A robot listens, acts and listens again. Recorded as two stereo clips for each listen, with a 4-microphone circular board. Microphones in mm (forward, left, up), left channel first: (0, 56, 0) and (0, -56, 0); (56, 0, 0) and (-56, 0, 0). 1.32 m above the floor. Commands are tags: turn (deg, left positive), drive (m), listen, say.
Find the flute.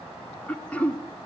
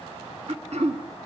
<listen/>
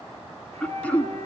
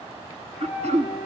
<turn deg="-85"/>
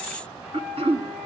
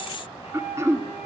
<say>Facing the flute, over 4 m away.</say>